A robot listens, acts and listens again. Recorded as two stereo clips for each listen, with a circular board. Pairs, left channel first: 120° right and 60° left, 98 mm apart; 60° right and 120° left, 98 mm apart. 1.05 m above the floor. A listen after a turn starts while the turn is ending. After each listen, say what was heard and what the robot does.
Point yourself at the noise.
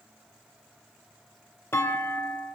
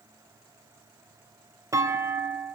The clunk: 175° left. Turn 175° left.
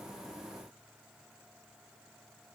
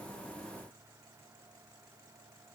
I heard a clunk from this way, but can't make it out now.